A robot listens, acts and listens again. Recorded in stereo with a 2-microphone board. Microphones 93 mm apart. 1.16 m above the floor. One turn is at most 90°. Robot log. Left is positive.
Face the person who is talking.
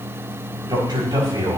note: The man speaking: about 55° right or 125° right.
cmd yaw -55
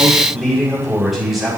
end: Found it: a man speaking, straight ahead, over 4 m away.